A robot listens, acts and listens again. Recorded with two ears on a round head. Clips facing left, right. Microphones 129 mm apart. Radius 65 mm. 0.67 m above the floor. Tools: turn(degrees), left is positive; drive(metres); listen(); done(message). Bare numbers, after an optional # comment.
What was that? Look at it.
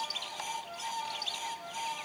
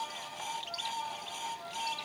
listen()
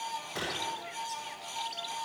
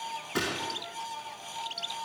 turn(-90)
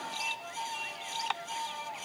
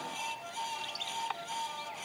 done("Facing where the gunshot came from. I can't hear it now.")